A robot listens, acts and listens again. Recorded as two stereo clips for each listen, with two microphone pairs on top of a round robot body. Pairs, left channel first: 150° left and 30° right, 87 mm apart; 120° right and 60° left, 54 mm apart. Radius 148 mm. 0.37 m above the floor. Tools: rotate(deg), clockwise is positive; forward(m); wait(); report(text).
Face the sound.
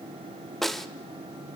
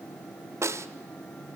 rotate(-60)
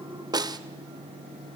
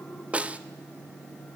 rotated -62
report("Found it: a snare drum, straight ahead, 1 to 2 m away.")